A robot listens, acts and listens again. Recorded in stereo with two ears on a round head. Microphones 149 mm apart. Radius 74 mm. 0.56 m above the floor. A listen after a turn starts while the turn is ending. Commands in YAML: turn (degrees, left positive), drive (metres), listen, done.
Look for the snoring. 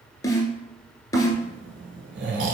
turn: -75
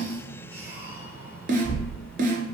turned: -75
turn: -15
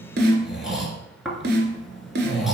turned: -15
done: "Found it: snoring, straight ahead, 1 to 2 m away."